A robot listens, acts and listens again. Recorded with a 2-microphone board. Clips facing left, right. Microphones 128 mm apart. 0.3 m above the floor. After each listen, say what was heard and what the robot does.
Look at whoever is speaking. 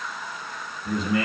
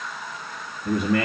The man speaking: about 60° right or 120° right. Turn 60° right.
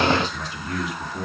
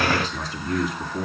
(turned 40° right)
So it is at 45° right. Turn 45° right.
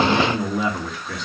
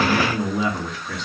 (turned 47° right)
Facing the man speaking.